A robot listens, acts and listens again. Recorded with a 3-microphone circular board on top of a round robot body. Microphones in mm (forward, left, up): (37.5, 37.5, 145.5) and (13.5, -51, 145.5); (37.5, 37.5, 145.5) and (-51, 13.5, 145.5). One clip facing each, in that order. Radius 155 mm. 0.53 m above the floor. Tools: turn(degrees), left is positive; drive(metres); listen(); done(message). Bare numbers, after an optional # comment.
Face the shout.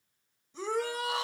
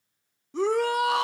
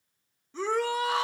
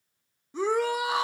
# The shout: 90° right.
turn(-90)
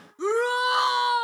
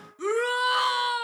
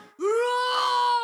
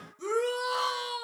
# The shout is now 10° left.
turn(10)
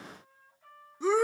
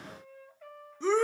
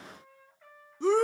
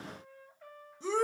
done("Facing the shout.")